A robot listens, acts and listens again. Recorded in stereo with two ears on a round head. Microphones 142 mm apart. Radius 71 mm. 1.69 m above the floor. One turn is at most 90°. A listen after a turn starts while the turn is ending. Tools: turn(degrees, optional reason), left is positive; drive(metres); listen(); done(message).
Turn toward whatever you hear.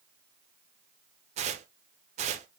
turn(degrees=-45, reason="The tearing paper: about 45° right or 135° right.")
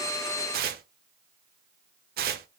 turn(degrees=-80, reason="So it is at 80° right.")
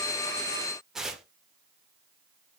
done("Found it: tearing paper, straight ahead, under 1 m away.")